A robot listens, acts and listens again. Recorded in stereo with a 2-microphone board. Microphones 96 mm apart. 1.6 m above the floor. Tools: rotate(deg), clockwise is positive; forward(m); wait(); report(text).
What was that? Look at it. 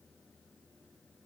wait()
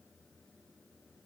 wait()
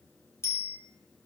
rotate(-30)
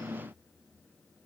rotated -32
wait()
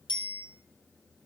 rotate(-120)
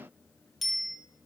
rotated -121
report("Facing the bicycle bell, over 4 m away.")